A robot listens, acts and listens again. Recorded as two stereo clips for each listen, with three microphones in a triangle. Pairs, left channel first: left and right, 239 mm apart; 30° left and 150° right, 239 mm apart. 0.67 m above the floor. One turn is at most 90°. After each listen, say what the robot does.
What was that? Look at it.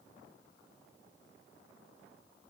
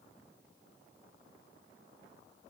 Keep listening.
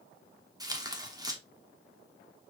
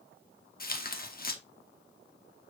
Turn 20° right.
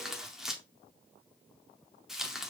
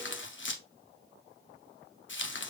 Found it: tearing paper, straight ahead.